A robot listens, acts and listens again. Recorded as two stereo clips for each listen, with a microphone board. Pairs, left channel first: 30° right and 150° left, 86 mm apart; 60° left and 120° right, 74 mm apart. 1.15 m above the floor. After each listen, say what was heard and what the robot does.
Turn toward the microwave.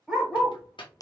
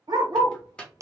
The microwave: 15° right. Turn 15° right.
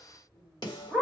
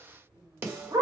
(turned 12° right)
Keep listening.
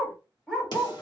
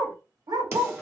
Keep listening.
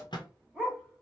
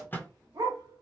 Facing the microwave.